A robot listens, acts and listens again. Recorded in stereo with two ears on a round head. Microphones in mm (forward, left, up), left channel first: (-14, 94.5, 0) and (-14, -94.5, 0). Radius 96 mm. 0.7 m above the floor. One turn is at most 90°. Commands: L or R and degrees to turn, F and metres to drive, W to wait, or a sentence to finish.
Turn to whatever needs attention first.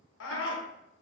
L65
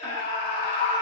L30
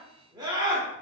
R20
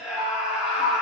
Found it: a scream, straight ahead.